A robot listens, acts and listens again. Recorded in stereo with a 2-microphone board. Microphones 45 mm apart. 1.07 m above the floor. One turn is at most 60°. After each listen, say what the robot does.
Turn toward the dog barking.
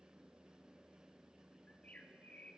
Keep listening.
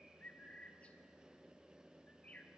Keep listening.
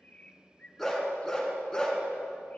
Turn 15° left.
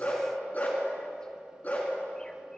Turn 35° left.
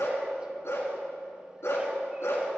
Turn 60° left.
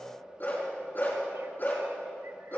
Turn 45° left.
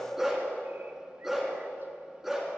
Facing the dog barking, 2 to 4 m away.